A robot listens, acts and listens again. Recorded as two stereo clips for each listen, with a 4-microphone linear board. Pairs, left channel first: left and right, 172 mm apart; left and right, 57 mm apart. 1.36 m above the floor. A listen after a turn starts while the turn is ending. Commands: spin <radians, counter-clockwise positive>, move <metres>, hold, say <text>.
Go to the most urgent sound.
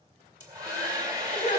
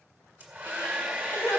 spin 0.87
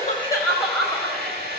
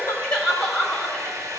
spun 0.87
move 1.0
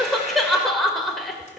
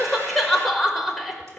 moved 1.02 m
move 1.0
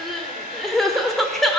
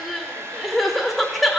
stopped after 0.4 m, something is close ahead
say I am next to the crying.